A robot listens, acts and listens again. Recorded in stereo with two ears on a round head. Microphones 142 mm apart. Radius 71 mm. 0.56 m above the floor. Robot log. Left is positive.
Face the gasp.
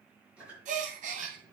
note: The gasp: about 50° right or 130° right.
cmd yaw -50
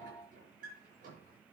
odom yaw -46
cmd idle
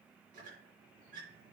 end: I heard a gasp, but can't make it out now. It was about 5° right or 80° right.